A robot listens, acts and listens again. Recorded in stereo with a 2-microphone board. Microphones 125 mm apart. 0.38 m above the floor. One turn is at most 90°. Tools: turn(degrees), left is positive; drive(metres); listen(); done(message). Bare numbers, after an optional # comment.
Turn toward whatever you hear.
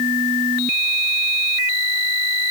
listen()
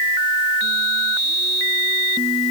listen()
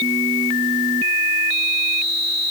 done("I can't make out anything.")